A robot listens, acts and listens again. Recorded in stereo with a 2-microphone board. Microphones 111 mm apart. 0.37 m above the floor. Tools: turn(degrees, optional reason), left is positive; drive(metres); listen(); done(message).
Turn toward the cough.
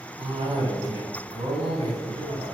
turn(degrees=-65, reason="The cough: about 65° right or 115° right.")
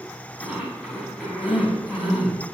turn(degrees=-15, reason="So it is at 15° right.")
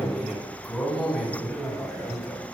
done("Found it: a cough, straight ahead, 2 to 4 m away.")